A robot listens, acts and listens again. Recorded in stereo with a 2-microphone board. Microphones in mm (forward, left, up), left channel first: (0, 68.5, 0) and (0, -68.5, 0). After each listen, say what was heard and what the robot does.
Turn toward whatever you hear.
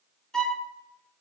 Turn 30° left.
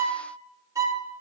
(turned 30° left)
So it is at 25° right. Turn 25° right.
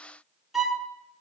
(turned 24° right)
Found it: a violin, straight ahead, 1 to 2 m away.